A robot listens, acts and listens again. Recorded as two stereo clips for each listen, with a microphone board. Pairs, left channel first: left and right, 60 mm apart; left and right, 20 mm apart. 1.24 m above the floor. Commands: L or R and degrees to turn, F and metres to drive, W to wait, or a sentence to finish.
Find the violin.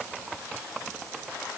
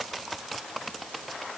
W
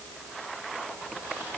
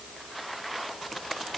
W
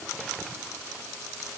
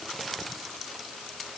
I can't make out a violin.